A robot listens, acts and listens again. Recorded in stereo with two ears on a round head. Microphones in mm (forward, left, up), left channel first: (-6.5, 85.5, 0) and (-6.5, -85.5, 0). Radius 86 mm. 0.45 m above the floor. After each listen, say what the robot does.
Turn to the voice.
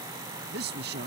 Turn 60° right.
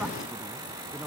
Keep listening.
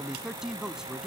Facing the man speaking.